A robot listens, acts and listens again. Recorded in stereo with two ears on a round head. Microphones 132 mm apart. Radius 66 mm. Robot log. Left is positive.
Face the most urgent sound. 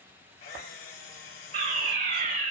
note: The fire alarm: about 50° right or 130° right.
cmd yaw -50
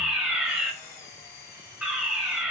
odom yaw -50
note: So it is at 10° right.
cmd yaw -10
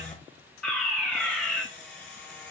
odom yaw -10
end: Found it: a fire alarm, straight ahead, 2 to 4 m away.